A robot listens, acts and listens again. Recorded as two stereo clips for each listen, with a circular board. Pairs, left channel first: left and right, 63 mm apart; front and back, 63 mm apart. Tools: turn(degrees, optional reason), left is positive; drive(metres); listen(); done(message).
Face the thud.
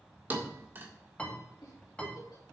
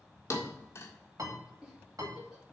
turn(degrees=-35, reason="The thud: 35° right.")
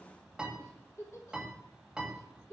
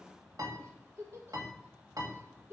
done("I heard a thud from this way, but can't make it out now.")